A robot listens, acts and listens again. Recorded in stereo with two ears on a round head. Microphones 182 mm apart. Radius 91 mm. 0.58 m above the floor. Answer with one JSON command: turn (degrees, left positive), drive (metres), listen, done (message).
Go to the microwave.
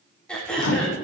{"turn": 90}
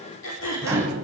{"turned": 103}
{"turn": -15}
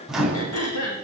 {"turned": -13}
{"drive": 1.0}
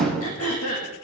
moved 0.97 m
{"drive": 1.0}
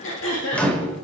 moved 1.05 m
{"drive": 1.0}
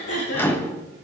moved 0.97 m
{"turn": 15}
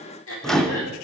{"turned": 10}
{"drive": 1.0}
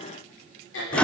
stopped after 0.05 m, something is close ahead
{"done": "Arrived at the microwave, straight ahead."}